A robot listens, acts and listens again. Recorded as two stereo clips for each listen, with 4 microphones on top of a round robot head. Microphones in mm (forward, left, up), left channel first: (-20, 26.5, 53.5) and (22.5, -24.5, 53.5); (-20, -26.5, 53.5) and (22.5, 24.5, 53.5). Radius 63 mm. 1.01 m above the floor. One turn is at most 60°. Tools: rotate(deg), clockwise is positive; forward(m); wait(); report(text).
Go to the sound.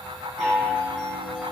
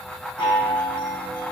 rotate(60)
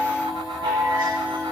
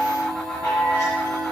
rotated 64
rotate(60)
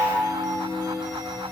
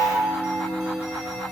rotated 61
rotate(20)
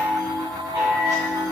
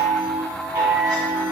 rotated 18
forward(1.0)
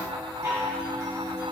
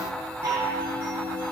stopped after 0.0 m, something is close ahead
report("Something is in my way. I am facing the chime but have not reached it.")